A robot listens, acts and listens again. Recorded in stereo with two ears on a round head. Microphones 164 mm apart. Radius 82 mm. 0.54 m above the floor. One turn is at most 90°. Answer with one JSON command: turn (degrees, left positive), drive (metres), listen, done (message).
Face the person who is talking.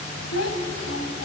{"turn": 75}
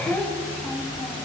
{"done": "Facing the child speaking, 2 to 4 m away."}